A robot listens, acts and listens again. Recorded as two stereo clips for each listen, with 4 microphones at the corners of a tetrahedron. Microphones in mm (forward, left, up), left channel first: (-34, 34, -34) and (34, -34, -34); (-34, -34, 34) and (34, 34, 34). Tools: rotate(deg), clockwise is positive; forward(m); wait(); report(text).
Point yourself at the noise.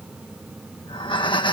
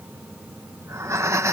rotate(-105)
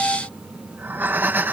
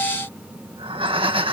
rotate(-25)
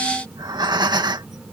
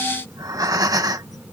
report("Facing the breathing.")